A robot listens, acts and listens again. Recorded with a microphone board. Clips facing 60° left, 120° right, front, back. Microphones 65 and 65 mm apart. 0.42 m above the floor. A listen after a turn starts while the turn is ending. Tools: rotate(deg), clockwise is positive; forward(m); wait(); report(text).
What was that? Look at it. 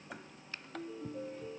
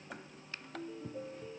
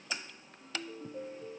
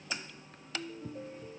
rotate(25)
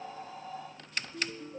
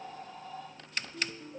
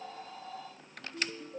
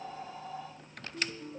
report("Found it: a ringtone, straight ahead, over 4 m away.")